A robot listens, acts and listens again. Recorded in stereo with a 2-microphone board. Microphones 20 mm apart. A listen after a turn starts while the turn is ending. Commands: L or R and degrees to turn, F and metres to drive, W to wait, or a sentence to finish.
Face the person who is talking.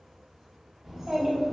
R30
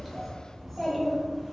L20
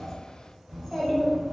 L20
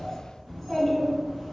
L30
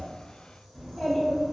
L15
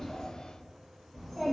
Found it: a child speaking, straight ahead.